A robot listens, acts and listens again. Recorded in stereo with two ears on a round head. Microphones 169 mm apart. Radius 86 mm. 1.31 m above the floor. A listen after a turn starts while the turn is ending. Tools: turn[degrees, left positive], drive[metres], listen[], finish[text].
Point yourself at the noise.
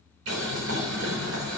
Action: turn[-90]
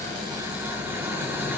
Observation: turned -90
Thought: So it is at 10° right.
Action: turn[-10]
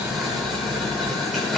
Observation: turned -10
Action: finish[Facing the boiling.]